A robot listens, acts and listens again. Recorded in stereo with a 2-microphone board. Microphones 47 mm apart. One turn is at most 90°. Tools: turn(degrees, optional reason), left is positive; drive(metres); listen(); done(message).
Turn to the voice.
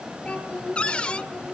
turn(degrees=25, reason="The child speaking: about 25° left or 155° left.")
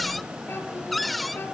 turn(degrees=90, reason="So it is at 125° left.")
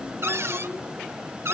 turn(degrees=35, reason="Nothing new. It was at 35° left.")
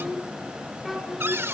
done("Found it: a child speaking, straight ahead, over 4 m away.")